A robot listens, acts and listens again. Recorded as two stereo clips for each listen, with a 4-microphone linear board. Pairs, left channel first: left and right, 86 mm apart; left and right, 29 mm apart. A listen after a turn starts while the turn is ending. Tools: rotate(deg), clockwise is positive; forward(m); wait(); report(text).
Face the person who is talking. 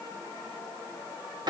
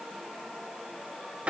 wait()
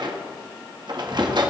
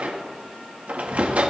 wait()
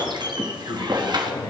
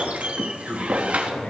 rotate(-65)
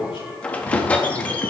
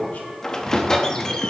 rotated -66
wait()
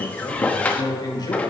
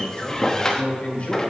rotate(-50)
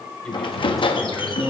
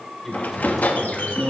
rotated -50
report("Found it: a man speaking, straight ahead, 2 to 4 m away.")